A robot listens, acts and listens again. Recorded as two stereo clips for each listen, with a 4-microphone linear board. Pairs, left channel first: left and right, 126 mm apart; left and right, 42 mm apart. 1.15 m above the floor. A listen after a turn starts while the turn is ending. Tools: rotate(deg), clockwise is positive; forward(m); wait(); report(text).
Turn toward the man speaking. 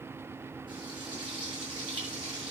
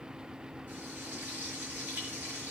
wait()
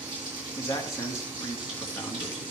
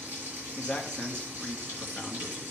rotate(-25)
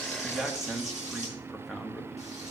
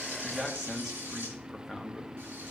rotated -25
report("Found it: a man speaking, straight ahead, 1 to 2 m away.")